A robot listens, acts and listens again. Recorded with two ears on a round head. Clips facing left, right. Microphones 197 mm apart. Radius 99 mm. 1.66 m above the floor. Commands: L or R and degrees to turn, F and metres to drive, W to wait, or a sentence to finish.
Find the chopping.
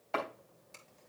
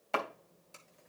R60
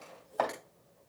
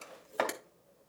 R35
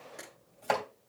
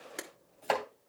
Found it: chopping, straight ahead.